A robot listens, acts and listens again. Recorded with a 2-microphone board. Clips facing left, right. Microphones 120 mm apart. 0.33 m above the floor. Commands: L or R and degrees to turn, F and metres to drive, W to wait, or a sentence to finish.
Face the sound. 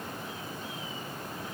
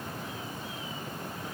W
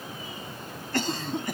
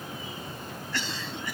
L50
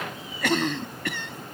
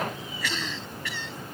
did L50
L75
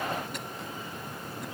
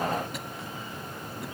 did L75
W
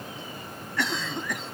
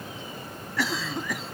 Facing the cough.